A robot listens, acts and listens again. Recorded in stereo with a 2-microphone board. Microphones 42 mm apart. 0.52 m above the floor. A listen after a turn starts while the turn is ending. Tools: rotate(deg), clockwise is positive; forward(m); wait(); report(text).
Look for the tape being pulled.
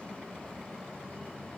wait()
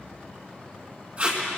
rotate(35)
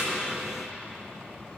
wait()
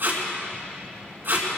rotate(115)
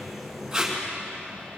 rotate(15)
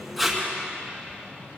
report("Facing the tape being pulled.")